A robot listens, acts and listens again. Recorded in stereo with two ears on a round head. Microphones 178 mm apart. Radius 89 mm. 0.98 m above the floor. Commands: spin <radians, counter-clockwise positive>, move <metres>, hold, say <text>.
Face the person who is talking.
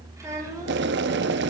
spin -0.35
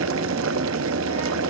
hold
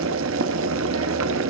hold
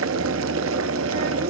say I heard a child speaking, but can't make it out now. It was about straight ahead or 140° right.